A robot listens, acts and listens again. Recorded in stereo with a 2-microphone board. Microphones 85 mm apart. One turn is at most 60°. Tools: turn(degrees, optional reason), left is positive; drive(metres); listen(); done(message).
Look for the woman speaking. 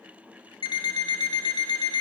listen()
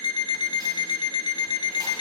listen()
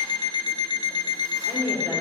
turn(degrees=-60)
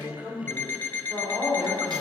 turn(degrees=-35, reason="So it is at 35° right.")
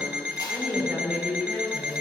done("Found it: a woman speaking, straight ahead, over 4 m away.")